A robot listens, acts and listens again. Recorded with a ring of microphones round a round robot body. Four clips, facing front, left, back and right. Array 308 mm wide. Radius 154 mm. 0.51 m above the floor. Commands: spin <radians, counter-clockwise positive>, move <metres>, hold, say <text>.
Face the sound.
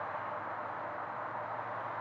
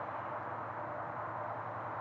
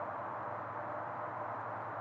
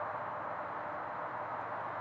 hold
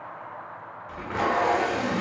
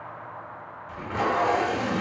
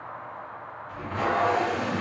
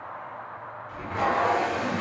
spin 0.44
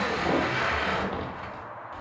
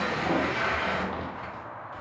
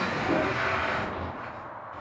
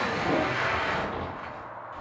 say Facing the tape being pulled.